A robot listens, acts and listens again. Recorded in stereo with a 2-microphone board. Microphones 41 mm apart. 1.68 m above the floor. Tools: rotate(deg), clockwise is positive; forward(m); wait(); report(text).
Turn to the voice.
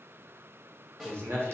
rotate(65)
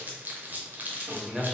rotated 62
rotate(10)
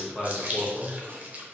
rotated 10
report("Found it: a man speaking, straight ahead.")